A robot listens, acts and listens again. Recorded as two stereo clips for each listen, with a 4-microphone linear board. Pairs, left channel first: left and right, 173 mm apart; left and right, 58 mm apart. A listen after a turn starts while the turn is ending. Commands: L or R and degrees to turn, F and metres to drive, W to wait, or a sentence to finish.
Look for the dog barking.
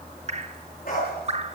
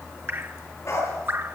L60
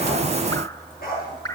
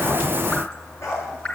L60
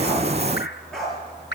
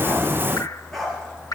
Found it: a dog barking, straight ahead.